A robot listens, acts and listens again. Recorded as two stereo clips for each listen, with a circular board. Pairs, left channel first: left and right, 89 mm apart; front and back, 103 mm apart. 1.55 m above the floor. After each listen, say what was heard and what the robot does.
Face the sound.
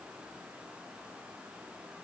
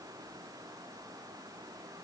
Keep listening.
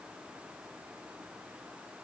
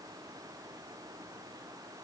Keep listening.
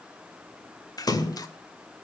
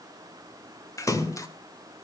The splash: 55° left. Turn 55° left.
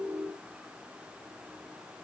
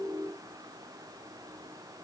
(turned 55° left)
I heard a splash from this way, but can't make it out now.